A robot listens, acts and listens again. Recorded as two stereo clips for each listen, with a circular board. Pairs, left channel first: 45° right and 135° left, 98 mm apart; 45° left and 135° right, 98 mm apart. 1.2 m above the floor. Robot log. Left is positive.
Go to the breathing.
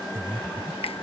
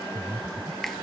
note: The breathing: 160° left.
cmd yaw +160
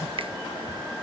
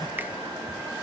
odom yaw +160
cmd idle
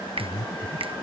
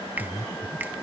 cmd fwd 1.0
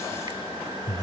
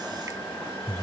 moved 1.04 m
cmd fwd 1.0
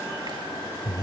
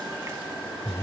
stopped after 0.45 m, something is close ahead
end: Arrived at the breathing, straight ahead.